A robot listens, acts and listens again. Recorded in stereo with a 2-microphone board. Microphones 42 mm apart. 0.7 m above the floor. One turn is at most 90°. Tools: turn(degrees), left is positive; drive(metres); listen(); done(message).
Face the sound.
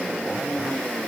listen()
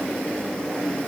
listen()
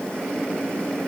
done("I can't make out anything to turn to.")